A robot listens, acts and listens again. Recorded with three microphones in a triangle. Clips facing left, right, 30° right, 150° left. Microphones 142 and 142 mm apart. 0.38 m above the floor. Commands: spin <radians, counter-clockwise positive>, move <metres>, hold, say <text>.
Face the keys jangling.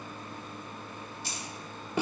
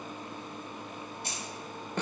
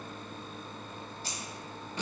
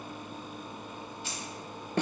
spin -1.31
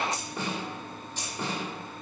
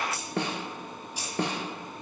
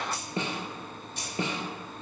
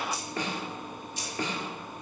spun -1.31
spin -0.17
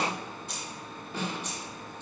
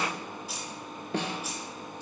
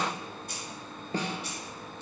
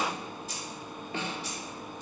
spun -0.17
spin -0.17
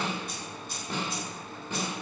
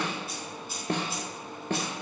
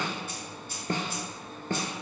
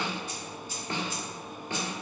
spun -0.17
say Facing the keys jangling, 2 to 4 m away.